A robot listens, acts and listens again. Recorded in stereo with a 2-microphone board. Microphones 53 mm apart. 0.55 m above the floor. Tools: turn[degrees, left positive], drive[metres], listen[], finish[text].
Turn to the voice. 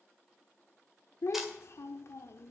Thought: The child speaking: about 60° left or 120° left.
Action: turn[60]
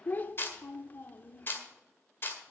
Thought: So it is at 45° left.
Action: turn[45]
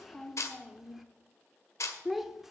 Action: finish[Found it: a child speaking, straight ahead.]